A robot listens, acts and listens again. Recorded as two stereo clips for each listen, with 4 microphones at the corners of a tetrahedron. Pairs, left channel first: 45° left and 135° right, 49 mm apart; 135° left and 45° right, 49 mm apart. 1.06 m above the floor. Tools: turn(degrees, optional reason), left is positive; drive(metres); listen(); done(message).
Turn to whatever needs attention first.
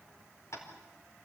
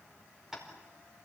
listen()
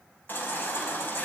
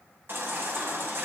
done("Facing the baby crying, over 4 m away.")